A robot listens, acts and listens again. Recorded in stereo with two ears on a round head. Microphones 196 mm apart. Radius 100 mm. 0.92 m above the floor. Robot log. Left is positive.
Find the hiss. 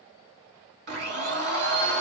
cmd idle
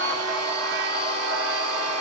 cmd idle
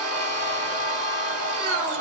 end: I can't make out a hiss, only a blender.